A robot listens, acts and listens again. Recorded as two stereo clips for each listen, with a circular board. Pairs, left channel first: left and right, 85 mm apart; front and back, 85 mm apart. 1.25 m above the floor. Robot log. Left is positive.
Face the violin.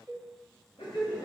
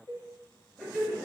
cmd idle
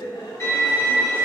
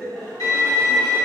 note: The violin: 40° left.
cmd yaw +40
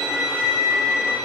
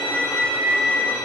note: The violin is now 10° right.
cmd yaw -10
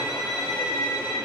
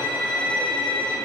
end: Found it: a violin, straight ahead, 1 to 2 m away.